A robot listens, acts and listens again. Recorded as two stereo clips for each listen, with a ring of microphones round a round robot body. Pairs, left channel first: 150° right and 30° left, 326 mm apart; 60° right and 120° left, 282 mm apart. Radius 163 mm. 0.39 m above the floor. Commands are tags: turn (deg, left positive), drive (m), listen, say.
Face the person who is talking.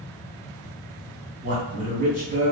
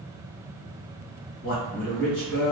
<turn deg="-35"/>
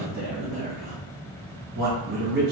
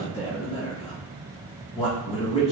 <say>Facing the man speaking.</say>